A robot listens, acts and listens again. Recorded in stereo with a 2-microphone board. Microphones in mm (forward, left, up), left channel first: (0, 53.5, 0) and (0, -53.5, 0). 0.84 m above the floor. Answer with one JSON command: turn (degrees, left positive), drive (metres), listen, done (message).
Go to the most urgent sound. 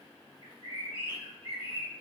{"listen": true}
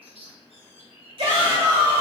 {"turn": -65}
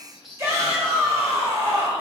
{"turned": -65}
{"turn": -35}
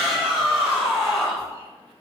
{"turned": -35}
{"drive": 1.0}
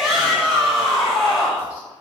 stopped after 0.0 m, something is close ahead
{"done": "Something is in my way. I am facing the shout but have not reached it."}